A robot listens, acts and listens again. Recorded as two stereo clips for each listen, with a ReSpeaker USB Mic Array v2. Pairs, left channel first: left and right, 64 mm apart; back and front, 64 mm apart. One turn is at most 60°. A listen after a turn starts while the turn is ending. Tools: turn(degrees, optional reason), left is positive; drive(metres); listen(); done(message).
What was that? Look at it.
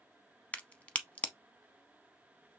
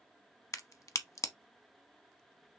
turn(degrees=60, reason="The crack: 155° left.")
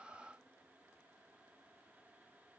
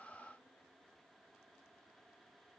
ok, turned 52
turn(degrees=60, reason="Nothing new. It was at 105° left.")
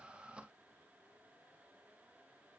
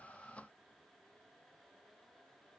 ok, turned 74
turn(degrees=30, reason="Nothing new. It was at 30° left.")
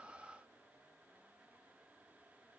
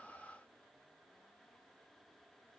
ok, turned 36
done("Facing where the crack came from. I can't hear it now.")